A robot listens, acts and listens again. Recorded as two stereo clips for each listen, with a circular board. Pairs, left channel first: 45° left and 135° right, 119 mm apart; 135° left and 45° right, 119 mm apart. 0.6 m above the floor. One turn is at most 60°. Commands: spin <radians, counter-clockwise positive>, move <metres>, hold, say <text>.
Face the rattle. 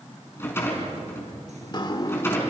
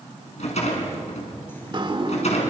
spin 1.05
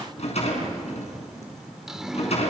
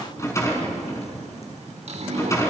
spin 1.05
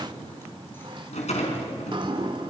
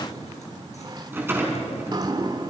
spin 0.44
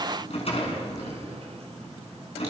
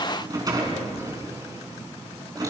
spin 0.17
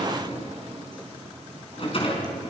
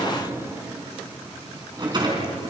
say Facing the rattle, over 4 m away.